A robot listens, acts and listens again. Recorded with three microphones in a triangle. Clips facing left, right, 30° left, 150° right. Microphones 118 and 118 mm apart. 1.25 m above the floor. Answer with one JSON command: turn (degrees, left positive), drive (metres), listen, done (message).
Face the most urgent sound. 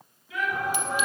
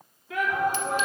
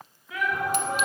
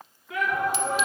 {"turn": -125}
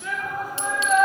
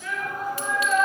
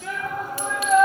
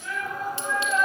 {"turn": 10}
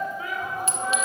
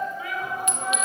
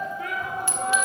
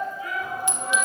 {"done": "Facing the shout, 2 to 4 m away."}